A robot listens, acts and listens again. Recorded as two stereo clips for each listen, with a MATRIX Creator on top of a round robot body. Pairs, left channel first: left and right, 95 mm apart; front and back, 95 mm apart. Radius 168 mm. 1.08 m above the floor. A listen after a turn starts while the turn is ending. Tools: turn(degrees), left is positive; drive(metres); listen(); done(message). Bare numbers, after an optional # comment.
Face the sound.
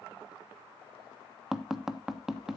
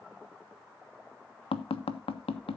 done("Found it: tapping, straight ahead, 1 to 2 m away.")